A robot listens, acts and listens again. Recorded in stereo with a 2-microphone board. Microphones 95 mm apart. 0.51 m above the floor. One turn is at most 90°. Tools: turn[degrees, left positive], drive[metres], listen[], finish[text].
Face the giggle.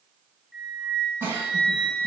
Thought: The giggle: about 25° right or 155° right.
Action: turn[-25]
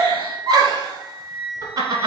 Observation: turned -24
Thought: So it is at 135° right.
Action: turn[-90]
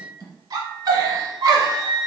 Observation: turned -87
Thought: The giggle is now 45° right.
Action: turn[-45]
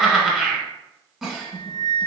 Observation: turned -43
Action: finish[Facing the giggle.]